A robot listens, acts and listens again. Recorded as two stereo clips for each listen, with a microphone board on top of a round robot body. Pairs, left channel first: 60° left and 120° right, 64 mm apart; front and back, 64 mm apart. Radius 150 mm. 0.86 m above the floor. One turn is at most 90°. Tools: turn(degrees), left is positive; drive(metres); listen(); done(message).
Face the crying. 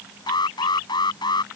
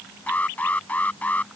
listen()
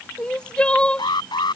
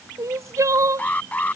turn(degrees=90)
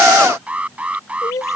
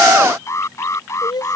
turn(degrees=20)
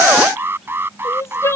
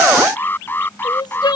done("Found it: crying, straight ahead.")